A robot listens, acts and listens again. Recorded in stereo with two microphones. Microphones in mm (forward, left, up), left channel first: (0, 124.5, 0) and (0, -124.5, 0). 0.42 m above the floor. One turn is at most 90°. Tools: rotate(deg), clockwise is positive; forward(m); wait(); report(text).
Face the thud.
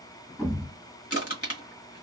rotate(-30)
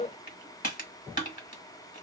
wait()
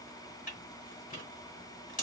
report("I heard a thud, but can't make it out now. It was about 30° right or 150° left.")